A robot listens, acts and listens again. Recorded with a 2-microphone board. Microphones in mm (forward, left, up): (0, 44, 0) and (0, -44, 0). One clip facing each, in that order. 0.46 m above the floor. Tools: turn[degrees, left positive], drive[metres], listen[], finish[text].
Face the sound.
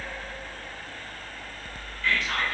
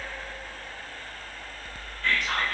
Thought: The whispering: about 55° right or 125° right.
Action: turn[-55]
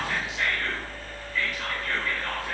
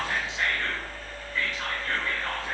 Thought: So it is at 35° right.
Action: turn[-35]
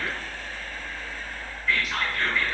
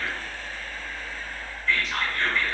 Action: finish[Facing the whispering, 1 to 2 m away.]